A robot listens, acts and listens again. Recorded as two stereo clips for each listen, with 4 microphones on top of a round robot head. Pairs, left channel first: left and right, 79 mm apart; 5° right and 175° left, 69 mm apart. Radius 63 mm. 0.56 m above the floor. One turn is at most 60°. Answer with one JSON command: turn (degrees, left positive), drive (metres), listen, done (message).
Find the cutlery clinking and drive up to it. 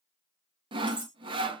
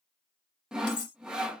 {"turn": -15}
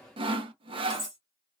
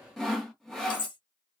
{"drive": 1.0}
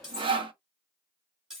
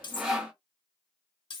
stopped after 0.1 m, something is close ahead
{"done": "Something is in my way. I am facing the cutlery clinking but have not reached it."}